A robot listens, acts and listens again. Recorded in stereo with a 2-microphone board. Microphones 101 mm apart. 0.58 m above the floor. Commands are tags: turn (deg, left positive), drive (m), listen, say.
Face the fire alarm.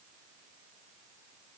<listen/>
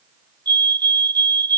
<turn deg="-50"/>
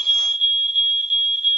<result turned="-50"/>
<say>Facing the fire alarm.</say>